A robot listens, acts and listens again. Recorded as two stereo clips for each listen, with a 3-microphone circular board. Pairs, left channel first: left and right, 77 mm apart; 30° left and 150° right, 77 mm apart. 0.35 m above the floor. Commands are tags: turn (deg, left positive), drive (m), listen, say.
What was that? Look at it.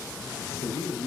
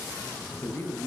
<turn deg="90"/>
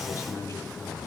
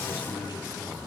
<turn deg="45"/>
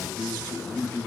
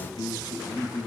<turn deg="25"/>
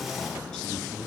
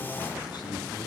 <listen/>
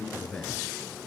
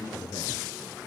<turn deg="15"/>
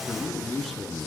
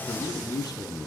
<say>Facing the man speaking.</say>